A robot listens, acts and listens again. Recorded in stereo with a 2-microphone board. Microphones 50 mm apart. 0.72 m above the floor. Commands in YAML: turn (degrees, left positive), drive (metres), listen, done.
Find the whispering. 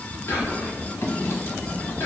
turn: 65
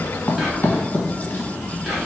done: "Found it: whispering, straight ahead, 1 to 2 m away."